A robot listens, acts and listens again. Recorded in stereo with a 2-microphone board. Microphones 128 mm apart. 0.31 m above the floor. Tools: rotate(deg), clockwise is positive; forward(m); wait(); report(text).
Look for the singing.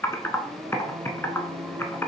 rotate(30)
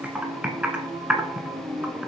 rotate(30)
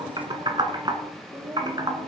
rotate(150)
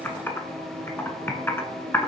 rotate(-10)
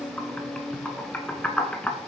report("Found it: singing, straight ahead, 2 to 4 m away.")